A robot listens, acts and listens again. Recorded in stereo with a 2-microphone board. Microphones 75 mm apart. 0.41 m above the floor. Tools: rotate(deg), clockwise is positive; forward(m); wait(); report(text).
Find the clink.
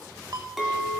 rotate(30)
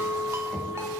rotate(150)
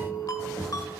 rotate(35)
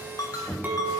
rotate(25)
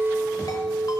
report("Facing the clink.")